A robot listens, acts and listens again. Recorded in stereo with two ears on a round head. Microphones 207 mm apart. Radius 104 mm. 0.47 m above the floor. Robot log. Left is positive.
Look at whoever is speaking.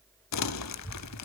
note: The child speaking: about 35° left or 145° left.
cmd yaw +35
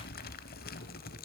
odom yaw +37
note: So it is at 110° left.
cmd yaw +110
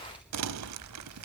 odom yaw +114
end: Facing the child speaking.